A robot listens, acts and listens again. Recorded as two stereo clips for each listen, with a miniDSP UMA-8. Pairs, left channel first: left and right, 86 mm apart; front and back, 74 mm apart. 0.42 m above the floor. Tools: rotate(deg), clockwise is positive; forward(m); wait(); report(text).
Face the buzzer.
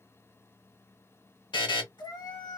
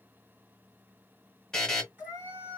rotate(-80)
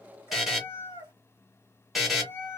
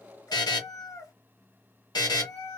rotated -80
report("Found it: a buzzer, straight ahead.")